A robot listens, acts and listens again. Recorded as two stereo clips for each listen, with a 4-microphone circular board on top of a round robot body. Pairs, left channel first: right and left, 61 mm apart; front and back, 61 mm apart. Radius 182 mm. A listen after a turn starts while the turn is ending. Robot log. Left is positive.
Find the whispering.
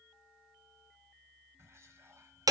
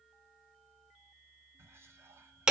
note: The whispering: 130° left.
cmd yaw +130
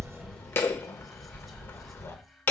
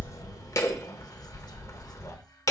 cmd idle
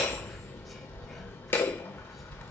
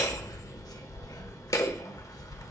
cmd idle
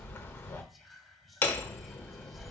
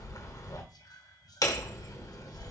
end: Found it: whispering, straight ahead.